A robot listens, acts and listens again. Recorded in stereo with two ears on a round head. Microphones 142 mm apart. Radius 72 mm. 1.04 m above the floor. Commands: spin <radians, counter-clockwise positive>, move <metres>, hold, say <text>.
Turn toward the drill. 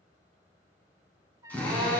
spin 0.52
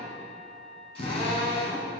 spin 2.36
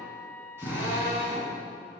spin -0.26
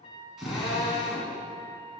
say Facing the drill.